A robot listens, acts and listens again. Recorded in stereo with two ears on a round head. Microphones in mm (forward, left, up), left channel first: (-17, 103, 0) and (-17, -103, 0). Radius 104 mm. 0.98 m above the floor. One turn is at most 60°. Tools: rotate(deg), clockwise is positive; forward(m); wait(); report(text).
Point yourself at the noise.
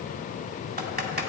rotate(40)
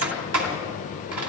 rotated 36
rotate(60)
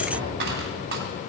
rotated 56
rotate(45)
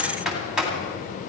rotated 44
report("Facing the typing on a keyboard.")